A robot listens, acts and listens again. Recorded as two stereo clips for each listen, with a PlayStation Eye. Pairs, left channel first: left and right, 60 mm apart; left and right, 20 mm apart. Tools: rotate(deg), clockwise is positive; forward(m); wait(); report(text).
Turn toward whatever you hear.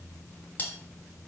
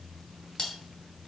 rotate(-25)
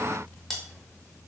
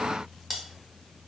report("Facing the cutlery clinking, 1 to 2 m away.")